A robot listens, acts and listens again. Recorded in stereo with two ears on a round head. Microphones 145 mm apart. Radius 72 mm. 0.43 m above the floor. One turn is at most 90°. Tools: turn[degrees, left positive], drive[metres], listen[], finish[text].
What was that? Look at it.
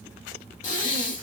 Thought: The breathing: about 55° left or 125° left.
Action: turn[55]
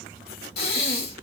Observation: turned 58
Thought: So it is at 65° left.
Action: turn[65]
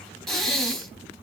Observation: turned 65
Action: finish[Found it: breathing, straight ahead, under 1 m away.]